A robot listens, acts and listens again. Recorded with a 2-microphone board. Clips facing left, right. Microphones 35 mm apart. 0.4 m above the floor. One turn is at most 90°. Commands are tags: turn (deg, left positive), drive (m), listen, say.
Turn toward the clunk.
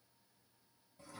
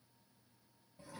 <listen/>
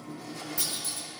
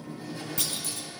<turn deg="-65"/>
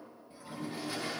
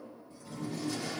<listen/>
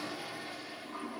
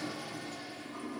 <say>I heard a clunk, but can't make it out now. It was about straight ahead or 50° right.</say>